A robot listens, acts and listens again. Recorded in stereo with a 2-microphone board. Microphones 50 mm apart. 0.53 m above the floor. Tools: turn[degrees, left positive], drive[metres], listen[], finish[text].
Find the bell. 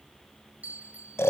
Thought: The bell: about 30° right or 150° right.
Action: turn[-30]
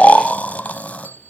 Thought: So it is at 115° right.
Action: turn[-115]
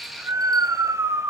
Action: listen[]
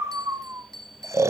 Thought: The bell is now 10° left.
Action: turn[10]
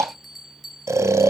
Action: finish[Facing the bell, 1 to 2 m away.]